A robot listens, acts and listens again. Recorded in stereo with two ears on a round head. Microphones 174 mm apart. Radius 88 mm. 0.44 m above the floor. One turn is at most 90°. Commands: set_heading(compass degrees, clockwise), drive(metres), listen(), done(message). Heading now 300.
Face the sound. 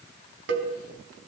set_heading(10)
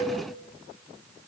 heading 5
set_heading(45)
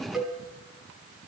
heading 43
done("Found it: a cowbell, straight ahead.")